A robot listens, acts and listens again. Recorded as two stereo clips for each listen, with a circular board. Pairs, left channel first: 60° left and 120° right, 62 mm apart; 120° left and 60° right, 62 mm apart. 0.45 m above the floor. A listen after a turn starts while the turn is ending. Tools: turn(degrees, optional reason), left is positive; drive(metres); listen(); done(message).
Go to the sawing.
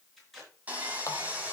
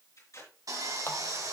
turn(degrees=-60, reason="The sawing: 60° right.")
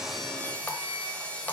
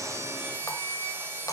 turn(degrees=-10, reason="The sawing is now 10° right.")
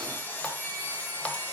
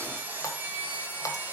drive(metres=1.0)
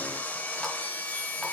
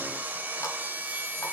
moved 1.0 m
drive(metres=1.0)
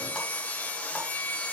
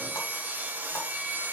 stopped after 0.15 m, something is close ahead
done("I am next to the sawing.")